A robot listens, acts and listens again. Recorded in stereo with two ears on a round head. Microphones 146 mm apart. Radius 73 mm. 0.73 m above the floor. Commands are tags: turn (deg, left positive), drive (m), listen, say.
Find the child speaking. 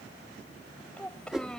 <turn deg="30"/>
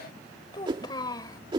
<turn deg="155"/>
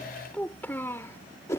<turn deg="15"/>
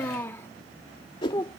<turn deg="20"/>
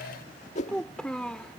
<say>Found it: a child speaking, straight ahead.</say>